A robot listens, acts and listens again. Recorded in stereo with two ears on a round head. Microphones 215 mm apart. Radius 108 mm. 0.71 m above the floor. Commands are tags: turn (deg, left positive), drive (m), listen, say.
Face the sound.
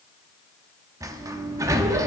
<turn deg="-30"/>
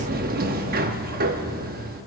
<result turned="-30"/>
<turn deg="-135"/>
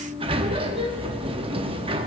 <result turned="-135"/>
<turn deg="-25"/>
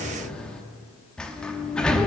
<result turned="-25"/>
<say>Found it: a sliding door, straight ahead.</say>